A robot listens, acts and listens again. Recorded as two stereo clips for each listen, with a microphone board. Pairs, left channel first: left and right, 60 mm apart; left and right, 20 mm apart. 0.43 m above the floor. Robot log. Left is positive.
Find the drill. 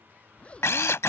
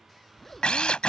note: The drill: about 50° left or 130° left.
cmd yaw +50
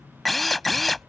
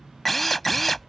end: Facing the drill.